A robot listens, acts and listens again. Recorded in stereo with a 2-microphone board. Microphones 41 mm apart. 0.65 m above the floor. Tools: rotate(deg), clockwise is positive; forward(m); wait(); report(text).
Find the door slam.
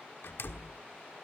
rotate(-65)
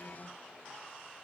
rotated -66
wait()
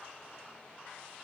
report("I heard a door slam, but can't make it out now. It was about straight ahead or 50° left.")